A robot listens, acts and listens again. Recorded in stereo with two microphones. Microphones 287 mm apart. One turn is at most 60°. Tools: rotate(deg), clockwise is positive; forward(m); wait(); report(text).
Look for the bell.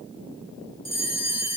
rotate(-60)
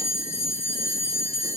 rotate(-25)
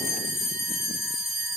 report("Facing the bell, 1 to 2 m away.")